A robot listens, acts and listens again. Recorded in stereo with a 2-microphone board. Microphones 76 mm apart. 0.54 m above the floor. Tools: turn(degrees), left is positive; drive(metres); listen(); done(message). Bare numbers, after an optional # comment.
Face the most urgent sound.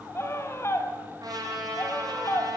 # The scream: about 40° left or 140° left.
turn(40)
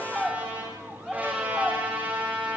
done("Found it: a scream, straight ahead, 2 to 4 m away.")